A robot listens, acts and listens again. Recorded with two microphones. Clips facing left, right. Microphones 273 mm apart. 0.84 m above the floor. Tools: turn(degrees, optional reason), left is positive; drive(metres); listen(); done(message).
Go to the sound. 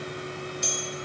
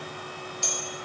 turn(degrees=20, reason="The bell: about 20° left or 160° left.")
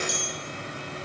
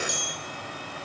drive(metres=1.0)
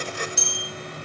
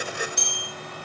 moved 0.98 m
drive(metres=1.0)
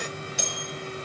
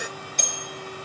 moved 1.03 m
turn(degrees=10, reason="The bell is now 10° left.")
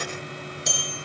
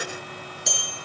drive(metres=1.0)
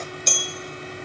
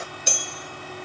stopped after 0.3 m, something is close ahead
turn(degrees=-10, reason="The bell is now 10° right.")
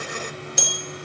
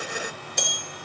done("I am next to the bell.")